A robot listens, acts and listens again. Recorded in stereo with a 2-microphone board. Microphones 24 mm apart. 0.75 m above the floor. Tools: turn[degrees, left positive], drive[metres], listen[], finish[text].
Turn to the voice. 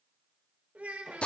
Action: turn[-90]
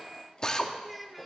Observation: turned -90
Action: finish[Facing the child speaking.]